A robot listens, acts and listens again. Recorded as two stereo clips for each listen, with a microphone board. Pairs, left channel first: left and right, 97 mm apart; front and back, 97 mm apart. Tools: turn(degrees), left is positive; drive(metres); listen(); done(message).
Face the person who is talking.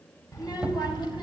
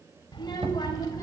turn(degrees=50)
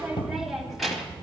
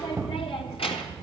done("Found it: a child speaking, straight ahead.")